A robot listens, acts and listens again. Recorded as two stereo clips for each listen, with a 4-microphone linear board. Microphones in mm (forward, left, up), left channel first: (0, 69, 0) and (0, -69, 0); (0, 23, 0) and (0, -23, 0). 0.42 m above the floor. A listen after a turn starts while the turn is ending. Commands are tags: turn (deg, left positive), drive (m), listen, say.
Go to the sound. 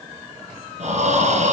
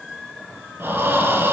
<turn deg="-65"/>
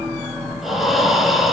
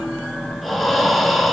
<drive m="1.0"/>
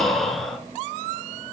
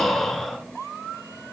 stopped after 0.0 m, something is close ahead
<say>Something is in my way. I am facing the breathing but have not reached it.</say>